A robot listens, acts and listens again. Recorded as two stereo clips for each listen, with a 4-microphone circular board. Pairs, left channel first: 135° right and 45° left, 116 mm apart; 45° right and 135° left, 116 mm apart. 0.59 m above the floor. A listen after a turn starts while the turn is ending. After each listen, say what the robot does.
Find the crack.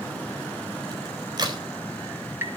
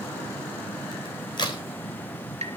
Facing the crack.